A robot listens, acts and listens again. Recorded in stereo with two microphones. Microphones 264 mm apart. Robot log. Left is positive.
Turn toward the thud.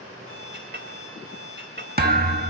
note: The thud: about 35° right or 145° right.
cmd yaw -35
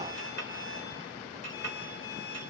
cmd idle
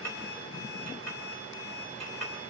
end: I heard a thud, but can't make it out now. It was about straight ahead or 110° right.